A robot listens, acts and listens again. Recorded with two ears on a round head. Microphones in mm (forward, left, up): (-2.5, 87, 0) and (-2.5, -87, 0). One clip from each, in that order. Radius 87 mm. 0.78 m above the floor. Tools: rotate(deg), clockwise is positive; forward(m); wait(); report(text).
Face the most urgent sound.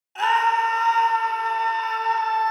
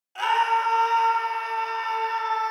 rotate(-30)
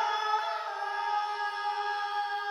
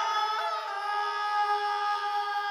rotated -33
rotate(35)
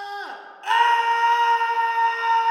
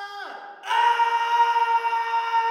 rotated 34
report("Facing the scream, 1 to 2 m away.")